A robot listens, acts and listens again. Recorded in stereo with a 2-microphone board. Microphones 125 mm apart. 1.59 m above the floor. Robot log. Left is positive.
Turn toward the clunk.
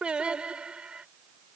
cmd idle
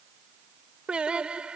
cmd idle
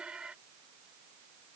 end: I can't make out a clunk to turn to.